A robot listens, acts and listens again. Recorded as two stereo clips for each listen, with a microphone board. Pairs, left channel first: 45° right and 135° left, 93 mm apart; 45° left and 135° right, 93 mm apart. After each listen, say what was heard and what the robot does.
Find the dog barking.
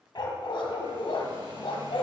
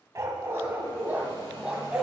The dog barking: 50° right. Turn 50° right.
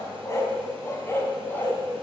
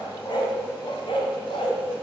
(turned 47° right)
The dog barking is now 25° left. Turn 25° left.
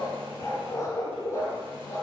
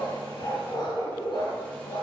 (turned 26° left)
The dog barking is now 20° left. Turn 20° left.
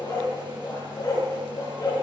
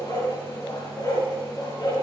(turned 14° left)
Found it: a dog barking, straight ahead, 2 to 4 m away.